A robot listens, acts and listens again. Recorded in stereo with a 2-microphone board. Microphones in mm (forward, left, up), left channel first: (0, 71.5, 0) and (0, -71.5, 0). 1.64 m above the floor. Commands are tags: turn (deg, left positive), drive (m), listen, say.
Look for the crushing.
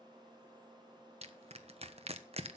<turn deg="-45"/>
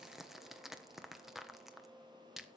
<say>Found it: crushing, straight ahead.</say>